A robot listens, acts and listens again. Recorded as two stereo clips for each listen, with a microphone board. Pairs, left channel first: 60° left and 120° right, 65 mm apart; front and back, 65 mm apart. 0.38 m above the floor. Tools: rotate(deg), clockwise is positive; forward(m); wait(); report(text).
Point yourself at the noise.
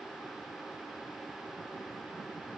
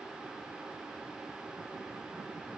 wait()
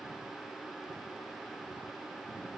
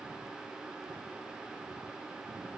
wait()
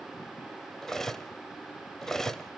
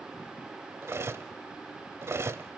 rotate(-145)
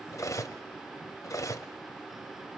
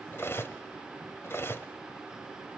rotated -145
rotate(-45)
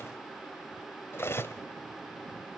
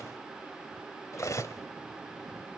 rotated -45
rotate(-20)
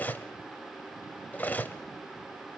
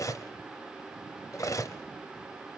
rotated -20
report("Found it: cutlery clinking, straight ahead.")